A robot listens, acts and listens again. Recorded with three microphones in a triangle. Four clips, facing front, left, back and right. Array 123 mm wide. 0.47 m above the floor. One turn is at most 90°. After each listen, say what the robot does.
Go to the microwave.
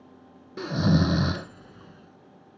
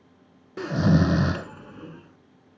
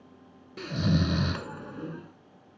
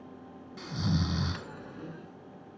Turn 90° left.
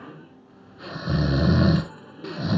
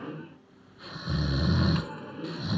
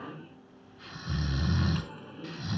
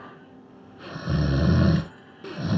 Turn 85° left.
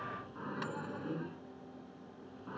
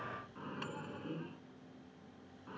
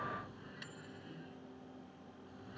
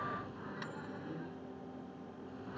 Turn 10° left.
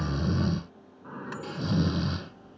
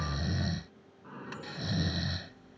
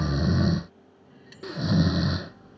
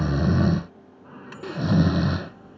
Drive 1.0 m forward.
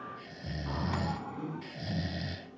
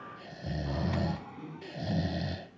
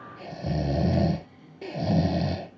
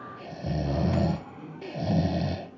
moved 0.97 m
Drive 1.0 m forward.
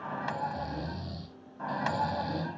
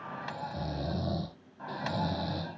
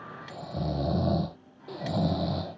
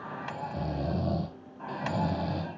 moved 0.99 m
Drive 1.0 m forward.
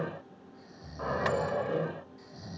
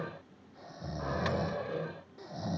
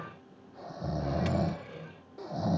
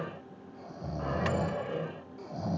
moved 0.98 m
Drive 1.0 m forward.
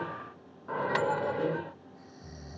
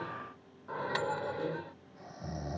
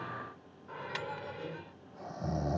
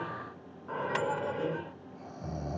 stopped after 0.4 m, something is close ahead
Turn 15° right.
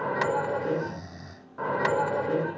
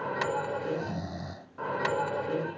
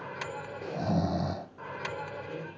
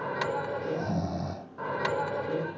Arrived at the microwave, straight ahead.